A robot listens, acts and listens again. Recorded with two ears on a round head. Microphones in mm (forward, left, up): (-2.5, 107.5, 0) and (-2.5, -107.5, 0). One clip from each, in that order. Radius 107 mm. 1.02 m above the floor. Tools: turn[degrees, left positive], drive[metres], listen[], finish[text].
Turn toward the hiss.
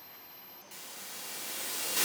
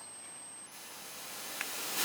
Thought: The hiss: about 50° left or 130° left.
Action: turn[50]
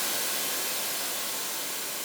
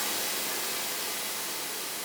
Thought: So it is at 10° left.
Action: turn[10]
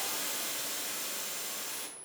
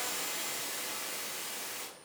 Action: finish[Found it: a hiss, straight ahead, 1 to 2 m away.]